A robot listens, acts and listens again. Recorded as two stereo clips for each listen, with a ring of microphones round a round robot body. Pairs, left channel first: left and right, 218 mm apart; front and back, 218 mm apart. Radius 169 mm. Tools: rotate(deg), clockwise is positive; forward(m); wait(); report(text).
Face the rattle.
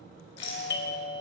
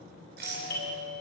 rotate(-120)
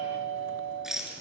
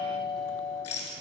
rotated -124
report("Found it: a rattle, straight ahead.")